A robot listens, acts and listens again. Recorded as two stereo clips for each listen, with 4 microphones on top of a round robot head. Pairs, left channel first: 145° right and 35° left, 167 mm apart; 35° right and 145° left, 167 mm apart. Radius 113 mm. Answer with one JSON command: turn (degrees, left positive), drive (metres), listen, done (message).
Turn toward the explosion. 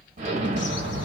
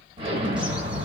{"turn": 85}
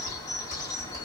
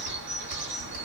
{"done": "I heard an explosion from this way, but can't make it out now."}